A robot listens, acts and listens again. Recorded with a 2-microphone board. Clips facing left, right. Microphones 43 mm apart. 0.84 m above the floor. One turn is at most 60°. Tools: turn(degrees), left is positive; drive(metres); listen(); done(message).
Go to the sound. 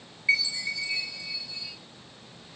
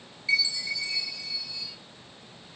turn(degrees=30)
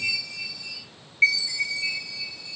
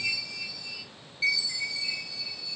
turn(degrees=60)
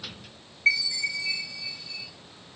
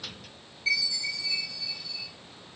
turn(degrees=60)
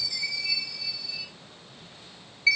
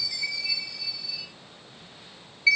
drive(metres=1.0)
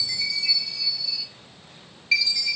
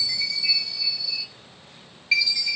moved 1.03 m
drive(metres=1.0)
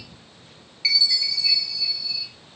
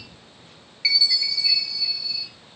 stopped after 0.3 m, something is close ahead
done("I am next to the chime.")